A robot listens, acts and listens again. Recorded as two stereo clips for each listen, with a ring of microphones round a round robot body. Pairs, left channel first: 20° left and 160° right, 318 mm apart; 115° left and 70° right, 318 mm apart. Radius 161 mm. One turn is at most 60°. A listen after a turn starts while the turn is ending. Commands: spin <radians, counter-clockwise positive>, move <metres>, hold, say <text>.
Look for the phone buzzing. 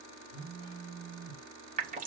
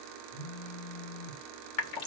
spin 1.05
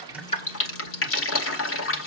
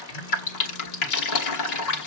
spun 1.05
spin 0.35
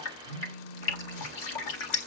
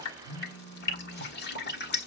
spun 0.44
say Facing the phone buzzing, over 4 m away.